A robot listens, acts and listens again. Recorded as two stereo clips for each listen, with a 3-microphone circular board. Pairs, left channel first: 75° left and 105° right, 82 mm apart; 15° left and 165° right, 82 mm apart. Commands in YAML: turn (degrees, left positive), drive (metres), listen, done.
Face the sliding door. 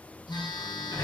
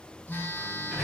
turn: 110
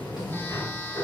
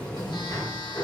turn: 45
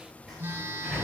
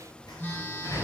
turn: -15
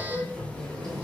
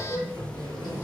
done: "Facing the sliding door."